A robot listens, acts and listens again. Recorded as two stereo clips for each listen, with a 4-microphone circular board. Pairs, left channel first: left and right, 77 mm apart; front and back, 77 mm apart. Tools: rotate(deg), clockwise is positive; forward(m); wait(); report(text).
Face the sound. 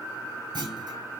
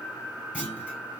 rotate(105)
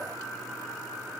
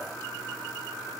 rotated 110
report("Facing where the clunk came from. I can't hear it now.")